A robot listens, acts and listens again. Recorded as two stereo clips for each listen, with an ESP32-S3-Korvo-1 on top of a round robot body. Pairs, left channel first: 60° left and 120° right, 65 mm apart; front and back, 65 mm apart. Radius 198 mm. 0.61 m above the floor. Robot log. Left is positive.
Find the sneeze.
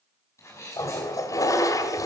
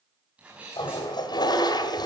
note: The sneeze: 105° left.
cmd yaw +105
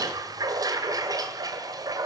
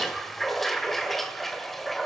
end: I heard a sneeze from this way, but can't make it out now.